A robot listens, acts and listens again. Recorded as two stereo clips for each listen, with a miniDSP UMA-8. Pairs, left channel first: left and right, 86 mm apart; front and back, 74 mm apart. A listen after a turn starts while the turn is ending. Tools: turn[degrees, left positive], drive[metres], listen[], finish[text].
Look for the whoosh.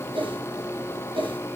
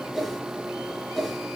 Thought: The whoosh: 90° right.
Action: turn[-90]
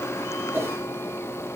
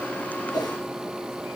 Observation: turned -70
Thought: The whoosh is now 25° right.
Action: turn[-25]
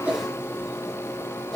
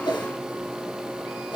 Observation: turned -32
Action: finish[Found it: a whoosh, straight ahead.]